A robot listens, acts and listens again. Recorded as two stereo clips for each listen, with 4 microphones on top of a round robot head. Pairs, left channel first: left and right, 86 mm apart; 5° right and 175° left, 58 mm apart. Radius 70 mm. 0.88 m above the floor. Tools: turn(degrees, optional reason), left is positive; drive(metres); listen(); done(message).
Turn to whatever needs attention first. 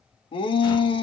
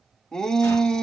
turn(degrees=75, reason="The shout: 75° left.")
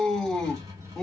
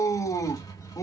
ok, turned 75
done("Facing the shout, 1 to 2 m away.")